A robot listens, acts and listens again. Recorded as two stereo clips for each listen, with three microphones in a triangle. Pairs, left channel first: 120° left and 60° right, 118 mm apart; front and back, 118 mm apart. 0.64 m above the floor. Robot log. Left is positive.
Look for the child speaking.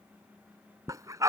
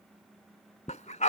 cmd idle
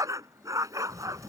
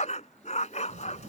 note: The child speaking: 160° right.
cmd yaw -160
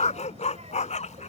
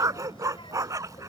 note: The child speaking is now 45° right.
cmd yaw -45
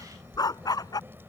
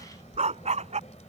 note: The child speaking is now 10° left.
cmd yaw +10
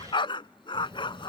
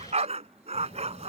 end: Facing the child speaking.